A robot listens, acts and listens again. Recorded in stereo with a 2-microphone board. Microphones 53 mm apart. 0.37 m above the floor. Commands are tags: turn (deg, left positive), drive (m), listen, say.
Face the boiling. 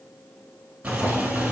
<turn deg="-30"/>
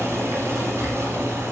<turn deg="-120"/>
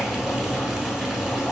<say>Found it: boiling, straight ahead.</say>